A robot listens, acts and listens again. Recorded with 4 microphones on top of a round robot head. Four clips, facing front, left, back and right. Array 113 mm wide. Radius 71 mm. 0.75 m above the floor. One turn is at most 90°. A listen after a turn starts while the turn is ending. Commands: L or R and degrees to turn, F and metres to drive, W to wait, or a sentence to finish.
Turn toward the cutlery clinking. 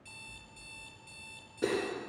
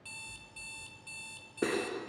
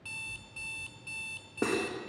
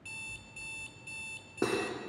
R90
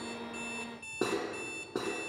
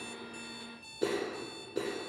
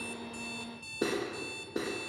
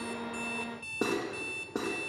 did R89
R50
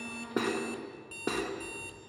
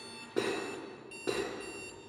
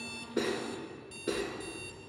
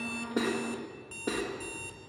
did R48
Found it: cutlery clinking, straight ahead.